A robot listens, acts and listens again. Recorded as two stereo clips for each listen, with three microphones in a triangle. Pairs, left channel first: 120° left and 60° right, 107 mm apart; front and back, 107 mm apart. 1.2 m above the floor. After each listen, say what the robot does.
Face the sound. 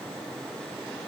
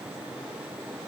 Keep listening.
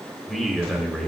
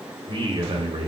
Turn 150° right.
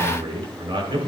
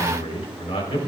Turn 25° right.
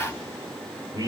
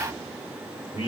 Turn 10° right.
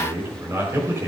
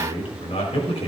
Facing the man speaking.